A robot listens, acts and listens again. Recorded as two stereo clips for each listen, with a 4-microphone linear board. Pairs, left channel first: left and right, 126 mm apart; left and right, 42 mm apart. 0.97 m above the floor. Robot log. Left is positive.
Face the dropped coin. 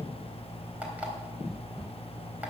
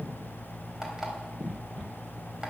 cmd idle
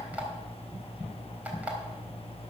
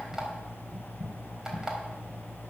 cmd idle
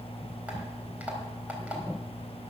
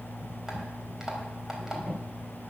end: I can't make out a dropped coin.